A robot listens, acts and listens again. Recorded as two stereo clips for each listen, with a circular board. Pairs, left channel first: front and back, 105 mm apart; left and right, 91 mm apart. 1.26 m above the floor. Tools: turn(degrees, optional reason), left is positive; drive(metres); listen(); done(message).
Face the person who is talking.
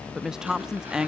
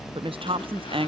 turn(degrees=-95, reason="The woman speaking: 95° right.")
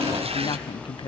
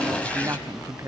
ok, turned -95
turn(degrees=-35, reason="The woman speaking is now 35° right.")
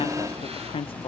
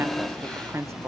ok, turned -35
turn(degrees=-30, reason="The woman speaking is now 30° right.")
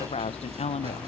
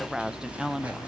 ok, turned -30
done("Found it: a woman speaking, straight ahead, under 1 m away.")